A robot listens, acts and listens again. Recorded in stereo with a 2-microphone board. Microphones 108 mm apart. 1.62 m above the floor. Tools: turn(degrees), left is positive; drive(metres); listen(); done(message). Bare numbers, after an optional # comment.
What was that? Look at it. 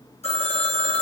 turn(90)
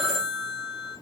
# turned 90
done("Facing the phone ringing, over 4 m away.")